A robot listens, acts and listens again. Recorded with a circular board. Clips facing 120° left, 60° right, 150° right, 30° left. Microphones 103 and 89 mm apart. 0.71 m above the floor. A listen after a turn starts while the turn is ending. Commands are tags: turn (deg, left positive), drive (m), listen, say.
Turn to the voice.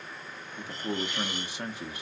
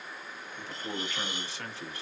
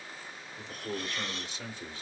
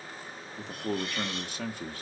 <turn deg="50"/>
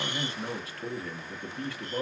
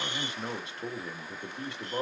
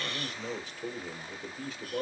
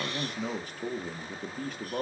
<say>Facing the man speaking, under 1 m away.</say>